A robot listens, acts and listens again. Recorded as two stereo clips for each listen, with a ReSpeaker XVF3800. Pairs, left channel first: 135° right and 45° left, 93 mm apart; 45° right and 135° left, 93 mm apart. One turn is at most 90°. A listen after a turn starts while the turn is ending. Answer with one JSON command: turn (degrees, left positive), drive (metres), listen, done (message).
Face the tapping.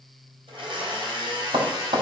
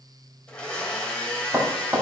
{"turn": 65}
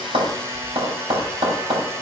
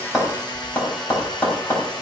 {"turn": 20}
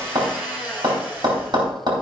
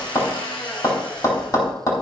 {"done": "Found it: tapping, straight ahead, 2 to 4 m away."}